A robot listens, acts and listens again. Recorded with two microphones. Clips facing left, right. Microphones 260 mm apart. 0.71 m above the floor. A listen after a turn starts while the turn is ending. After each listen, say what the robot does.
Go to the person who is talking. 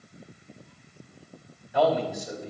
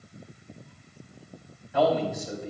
Turn 30° left.
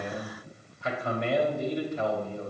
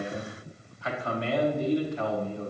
Turn 135° left.
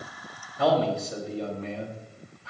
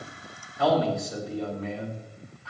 Turn 35° left.
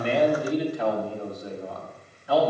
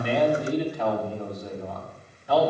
Drive 1.0 m forward.
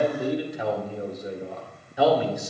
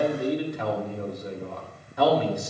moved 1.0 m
Drive 1.0 m forward.
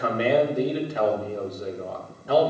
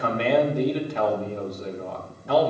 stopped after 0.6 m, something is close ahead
Turn 10° left.
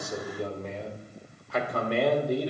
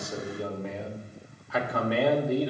Arrived at the man speaking, straight ahead.